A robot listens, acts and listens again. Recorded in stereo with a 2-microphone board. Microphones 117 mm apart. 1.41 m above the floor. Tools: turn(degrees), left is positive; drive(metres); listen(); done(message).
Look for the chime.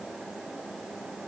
listen()
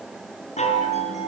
turn(degrees=75)
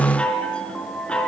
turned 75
turn(degrees=10)
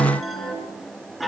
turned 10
done("Found it: a chime, straight ahead.")